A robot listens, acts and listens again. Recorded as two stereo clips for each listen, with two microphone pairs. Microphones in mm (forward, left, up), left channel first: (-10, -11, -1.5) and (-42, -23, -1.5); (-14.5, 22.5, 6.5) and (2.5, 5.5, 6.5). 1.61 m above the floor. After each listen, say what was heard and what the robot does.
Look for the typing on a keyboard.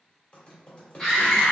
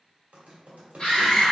The typing on a keyboard: 35° right. Turn 35° right.
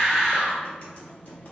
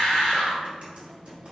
Keep listening.
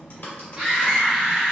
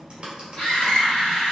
Found it: typing on a keyboard, straight ahead.